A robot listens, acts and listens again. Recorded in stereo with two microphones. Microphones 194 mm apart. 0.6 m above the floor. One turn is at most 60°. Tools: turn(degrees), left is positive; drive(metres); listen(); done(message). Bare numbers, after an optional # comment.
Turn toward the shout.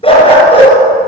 listen()
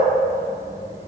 listen()
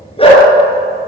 done("I can't make out a shout to turn to.")